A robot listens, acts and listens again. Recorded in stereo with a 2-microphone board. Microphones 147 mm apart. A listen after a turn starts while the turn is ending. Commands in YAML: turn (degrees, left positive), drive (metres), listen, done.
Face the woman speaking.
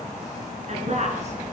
turn: -50
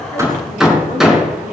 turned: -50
turn: -80
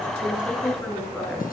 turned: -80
done: "Facing the woman speaking."